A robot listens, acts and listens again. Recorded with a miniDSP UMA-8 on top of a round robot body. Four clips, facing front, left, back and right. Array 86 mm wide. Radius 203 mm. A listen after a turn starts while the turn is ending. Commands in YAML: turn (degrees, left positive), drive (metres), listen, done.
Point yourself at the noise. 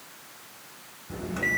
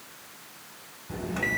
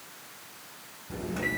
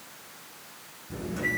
turn: 85
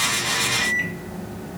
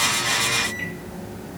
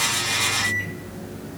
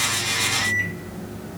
turn: 20
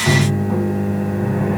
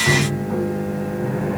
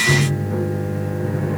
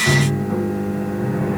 done: "Found it: a microwave, straight ahead."